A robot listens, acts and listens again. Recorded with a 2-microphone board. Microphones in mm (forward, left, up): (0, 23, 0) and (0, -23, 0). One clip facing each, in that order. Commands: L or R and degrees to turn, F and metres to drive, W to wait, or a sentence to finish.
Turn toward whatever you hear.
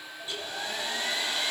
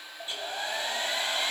R30
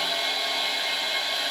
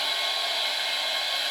Found it: a hair dryer, straight ahead.